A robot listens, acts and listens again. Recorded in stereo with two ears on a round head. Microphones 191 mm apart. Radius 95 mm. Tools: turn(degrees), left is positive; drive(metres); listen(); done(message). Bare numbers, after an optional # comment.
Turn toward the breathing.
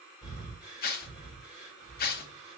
turn(-30)
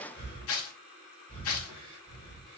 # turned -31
# So it is at 25° left.
turn(25)
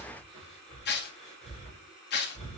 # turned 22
done("Facing the breathing, 2 to 4 m away.")